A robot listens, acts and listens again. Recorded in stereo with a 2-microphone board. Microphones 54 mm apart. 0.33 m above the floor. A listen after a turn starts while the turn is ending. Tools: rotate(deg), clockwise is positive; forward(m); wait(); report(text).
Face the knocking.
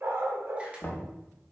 rotate(-40)
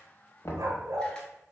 rotate(-90)
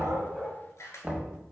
rotate(10)
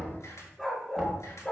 rotate(10)
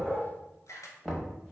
report("Facing the knocking, under 1 m away.")